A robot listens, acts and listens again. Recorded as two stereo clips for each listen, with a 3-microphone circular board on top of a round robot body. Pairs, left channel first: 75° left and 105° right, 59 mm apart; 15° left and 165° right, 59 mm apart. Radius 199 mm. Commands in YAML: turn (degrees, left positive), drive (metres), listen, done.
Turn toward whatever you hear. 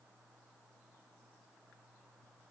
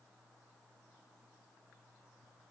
listen: true
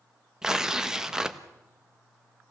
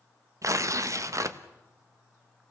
turn: 175
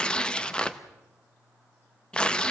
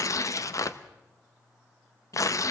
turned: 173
done: "Facing the tearing paper."